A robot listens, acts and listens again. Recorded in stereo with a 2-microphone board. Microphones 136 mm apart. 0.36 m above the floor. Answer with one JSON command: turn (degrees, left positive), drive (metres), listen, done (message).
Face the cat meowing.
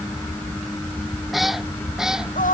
{"turn": -30}
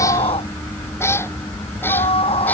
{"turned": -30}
{"turn": 20}
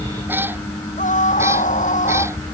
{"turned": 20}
{"turn": -15}
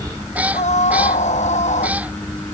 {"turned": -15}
{"turn": -10}
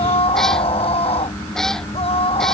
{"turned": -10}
{"done": "Found it: a cat meowing, straight ahead."}